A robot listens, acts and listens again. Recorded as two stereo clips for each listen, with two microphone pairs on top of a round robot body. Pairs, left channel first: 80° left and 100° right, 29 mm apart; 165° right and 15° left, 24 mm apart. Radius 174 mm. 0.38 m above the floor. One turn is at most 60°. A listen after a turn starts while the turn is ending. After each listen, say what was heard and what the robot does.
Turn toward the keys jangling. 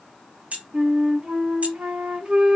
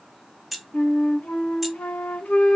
The keys jangling: 75° right. Turn 60° right.
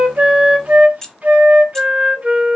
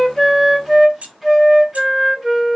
The keys jangling is now 10° left. Turn 10° left.
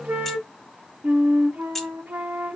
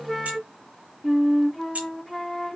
Found it: keys jangling, straight ahead, under 1 m away.